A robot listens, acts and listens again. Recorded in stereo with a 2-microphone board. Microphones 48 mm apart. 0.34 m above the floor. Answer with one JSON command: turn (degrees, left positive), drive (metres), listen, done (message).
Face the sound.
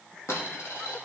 {"turn": 75}
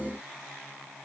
{"listen": true}
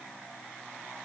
{"done": "I heard a dropped coin, but can't make it out now. It was about straight ahead or 30° left."}